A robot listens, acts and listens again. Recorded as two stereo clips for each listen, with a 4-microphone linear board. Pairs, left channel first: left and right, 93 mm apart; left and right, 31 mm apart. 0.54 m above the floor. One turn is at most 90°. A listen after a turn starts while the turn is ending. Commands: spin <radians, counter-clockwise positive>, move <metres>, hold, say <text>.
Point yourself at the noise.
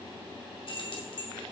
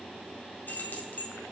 spin 1.05
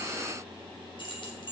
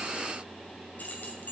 spin 1.05
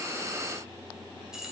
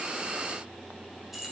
say Facing the keys jangling, 1 to 2 m away.